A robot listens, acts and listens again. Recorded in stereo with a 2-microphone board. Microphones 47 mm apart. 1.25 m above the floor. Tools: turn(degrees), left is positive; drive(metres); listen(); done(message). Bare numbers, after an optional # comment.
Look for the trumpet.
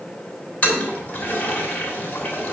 listen()
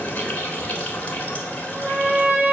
# The trumpet: about 20° right or 160° right.
turn(-20)
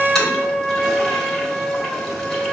done("Facing the trumpet, 1 to 2 m away.")